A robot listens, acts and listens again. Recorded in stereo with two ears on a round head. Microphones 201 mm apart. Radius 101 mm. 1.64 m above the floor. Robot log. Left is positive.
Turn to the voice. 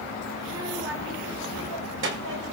note: The child speaking: about 60° right or 120° right.
cmd yaw -60
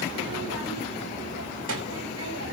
note: So it is at 65° right.
cmd yaw -65
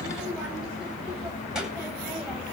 cmd idle
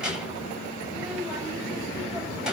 end: Found it: a child speaking, straight ahead, over 4 m away.